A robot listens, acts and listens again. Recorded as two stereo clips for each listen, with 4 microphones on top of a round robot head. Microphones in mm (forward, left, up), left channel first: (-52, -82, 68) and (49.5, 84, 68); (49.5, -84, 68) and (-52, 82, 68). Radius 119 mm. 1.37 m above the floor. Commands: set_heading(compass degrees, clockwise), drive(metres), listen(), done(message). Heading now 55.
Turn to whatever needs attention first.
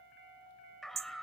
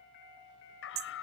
set_heading(90)
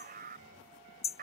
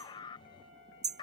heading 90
set_heading(80)
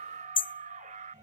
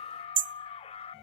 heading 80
done("Facing the scream.")